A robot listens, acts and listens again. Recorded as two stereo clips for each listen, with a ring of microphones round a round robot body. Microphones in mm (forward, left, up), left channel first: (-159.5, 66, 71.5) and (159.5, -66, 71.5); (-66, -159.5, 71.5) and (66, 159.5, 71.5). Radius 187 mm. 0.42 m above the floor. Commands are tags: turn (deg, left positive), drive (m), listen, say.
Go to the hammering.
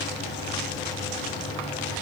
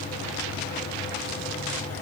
<listen/>
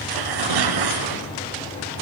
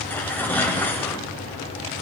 <listen/>
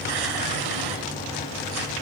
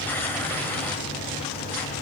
<say>I can't make out hammering, only tearing paper.</say>